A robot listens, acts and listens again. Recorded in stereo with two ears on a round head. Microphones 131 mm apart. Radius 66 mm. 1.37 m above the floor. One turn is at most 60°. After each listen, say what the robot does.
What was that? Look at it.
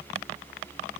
Keep listening.
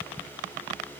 Keep listening.
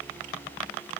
I can't make out anything to turn to.